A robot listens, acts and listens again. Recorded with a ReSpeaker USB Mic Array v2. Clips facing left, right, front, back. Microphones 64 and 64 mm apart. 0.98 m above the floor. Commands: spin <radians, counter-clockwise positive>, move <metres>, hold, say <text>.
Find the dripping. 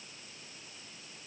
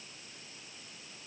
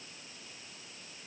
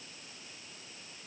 hold
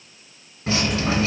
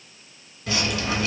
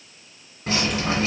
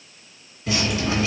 spin 0.70
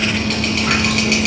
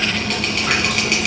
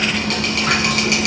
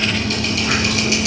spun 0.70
say Facing the dripping, 1 to 2 m away.